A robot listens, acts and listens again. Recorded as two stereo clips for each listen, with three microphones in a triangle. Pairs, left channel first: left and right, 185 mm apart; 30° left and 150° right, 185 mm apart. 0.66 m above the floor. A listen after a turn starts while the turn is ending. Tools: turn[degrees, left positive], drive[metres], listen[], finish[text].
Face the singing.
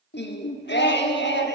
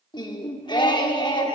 Thought: The singing: 95° left.
Action: turn[95]
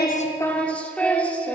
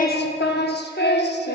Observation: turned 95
Thought: The singing is now 10° left.
Action: turn[10]
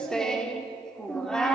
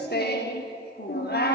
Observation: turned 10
Action: finish[Facing the singing, under 1 m away.]